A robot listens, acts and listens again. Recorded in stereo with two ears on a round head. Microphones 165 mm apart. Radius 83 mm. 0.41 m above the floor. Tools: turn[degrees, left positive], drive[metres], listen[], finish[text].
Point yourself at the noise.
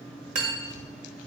Thought: The cutlery clinking: about 55° right or 125° right.
Action: turn[-55]
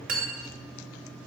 Thought: So it is at 60° right.
Action: turn[-60]
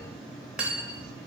Action: finish[Facing the cutlery clinking.]